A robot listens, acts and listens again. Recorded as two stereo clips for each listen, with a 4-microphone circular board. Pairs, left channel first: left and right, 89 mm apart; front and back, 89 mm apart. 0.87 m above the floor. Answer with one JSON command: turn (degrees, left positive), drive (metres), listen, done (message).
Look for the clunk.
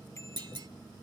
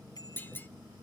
{"turn": -65}
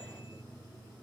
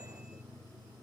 {"done": "I heard a clunk from this way, but can't make it out now."}